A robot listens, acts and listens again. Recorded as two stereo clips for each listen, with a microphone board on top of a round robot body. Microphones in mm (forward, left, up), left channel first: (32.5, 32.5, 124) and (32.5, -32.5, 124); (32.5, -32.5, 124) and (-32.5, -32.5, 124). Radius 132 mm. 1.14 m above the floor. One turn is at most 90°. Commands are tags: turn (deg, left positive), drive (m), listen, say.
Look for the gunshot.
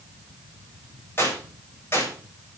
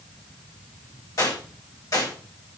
<turn deg="40"/>
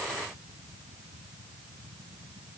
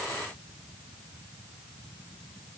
<say>Facing where the gunshot came from. I can't hear it now.</say>